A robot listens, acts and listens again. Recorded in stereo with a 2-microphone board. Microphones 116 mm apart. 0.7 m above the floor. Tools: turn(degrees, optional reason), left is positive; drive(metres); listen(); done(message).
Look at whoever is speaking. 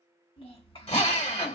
turn(degrees=55, reason="The child speaking: about 55° left or 125° left.")
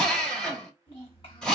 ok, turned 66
turn(degrees=55, reason="So it is at 55° left.")
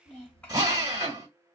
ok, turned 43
turn(degrees=10, reason="The child speaking is now 10° left.")
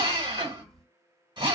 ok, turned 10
done("Found it: a child speaking, straight ahead.")